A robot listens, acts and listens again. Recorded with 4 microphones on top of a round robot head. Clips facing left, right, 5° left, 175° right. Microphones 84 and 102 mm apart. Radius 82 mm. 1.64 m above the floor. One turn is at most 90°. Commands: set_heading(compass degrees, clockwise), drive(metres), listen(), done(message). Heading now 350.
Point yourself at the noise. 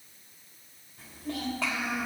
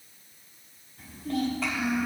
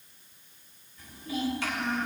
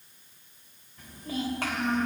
set_heading(260)
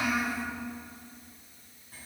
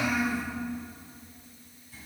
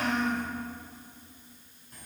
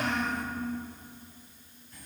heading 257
set_heading(212)
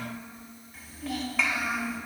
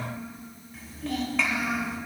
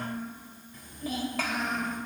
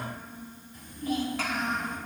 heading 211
done("Facing the child speaking, 2 to 4 m away.")